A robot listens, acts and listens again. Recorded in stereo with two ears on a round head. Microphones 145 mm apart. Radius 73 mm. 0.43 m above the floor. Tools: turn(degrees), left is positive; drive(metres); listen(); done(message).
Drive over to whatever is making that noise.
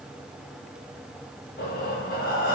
turn(degrees=55)
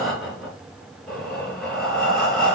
drive(metres=1.0)
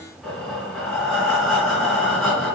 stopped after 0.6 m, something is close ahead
done("Blocked. The breathing is further on, straight ahead.")